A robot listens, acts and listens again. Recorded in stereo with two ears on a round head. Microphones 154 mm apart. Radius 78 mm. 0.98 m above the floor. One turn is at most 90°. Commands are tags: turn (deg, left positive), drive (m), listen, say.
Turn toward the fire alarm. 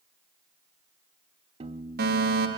<turn deg="-60"/>
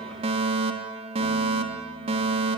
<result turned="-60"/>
<turn deg="-40"/>
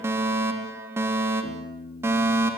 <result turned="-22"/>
<turn deg="-15"/>
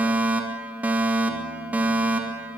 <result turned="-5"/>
<turn deg="-10"/>
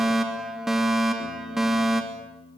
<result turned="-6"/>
<say>Facing the fire alarm.</say>